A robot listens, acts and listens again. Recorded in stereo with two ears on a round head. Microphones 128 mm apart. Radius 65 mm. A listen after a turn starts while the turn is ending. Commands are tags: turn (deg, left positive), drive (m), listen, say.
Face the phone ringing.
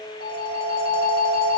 <turn deg="-65"/>
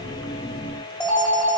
<say>Found it: a phone ringing, straight ahead.</say>